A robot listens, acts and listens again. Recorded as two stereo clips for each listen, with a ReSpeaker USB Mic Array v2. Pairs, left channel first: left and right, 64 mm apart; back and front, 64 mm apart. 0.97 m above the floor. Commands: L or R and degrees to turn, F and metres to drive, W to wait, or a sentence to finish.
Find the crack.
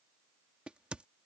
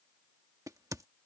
R15
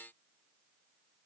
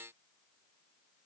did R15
Facing where the crack came from. I can't hear it now.